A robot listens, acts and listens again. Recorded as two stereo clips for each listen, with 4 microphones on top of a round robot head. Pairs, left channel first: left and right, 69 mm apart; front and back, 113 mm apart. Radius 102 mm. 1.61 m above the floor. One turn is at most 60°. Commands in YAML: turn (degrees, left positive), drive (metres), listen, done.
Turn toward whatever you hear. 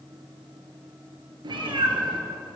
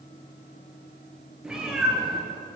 turn: -60
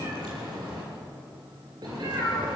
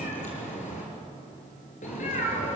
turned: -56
turn: -40
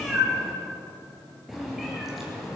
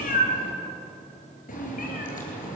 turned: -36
done: "Facing the cat meowing, over 4 m away."